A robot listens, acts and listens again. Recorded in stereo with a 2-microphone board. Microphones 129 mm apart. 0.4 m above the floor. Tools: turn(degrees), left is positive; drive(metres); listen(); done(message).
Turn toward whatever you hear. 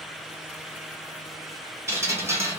turn(degrees=-20)
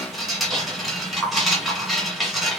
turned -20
done("Facing the dripping, 1 to 2 m away.")